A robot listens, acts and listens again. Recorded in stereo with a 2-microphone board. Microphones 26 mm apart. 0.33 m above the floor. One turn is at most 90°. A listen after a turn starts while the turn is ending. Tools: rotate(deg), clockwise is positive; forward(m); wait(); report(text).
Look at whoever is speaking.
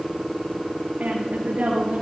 rotate(75)
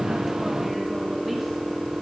wait()
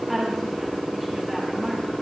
report("Facing the woman speaking.")